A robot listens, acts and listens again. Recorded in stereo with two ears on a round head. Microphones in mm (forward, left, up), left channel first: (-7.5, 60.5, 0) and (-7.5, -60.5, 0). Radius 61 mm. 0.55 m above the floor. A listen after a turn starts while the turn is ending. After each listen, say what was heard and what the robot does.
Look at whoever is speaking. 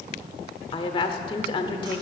The woman speaking: about 40° left or 140° left. Turn 40° left.
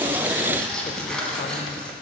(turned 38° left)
Keep listening.
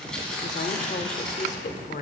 So it is at 95° left. Turn 95° left.
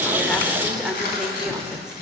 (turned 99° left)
Facing the woman speaking, 1 to 2 m away.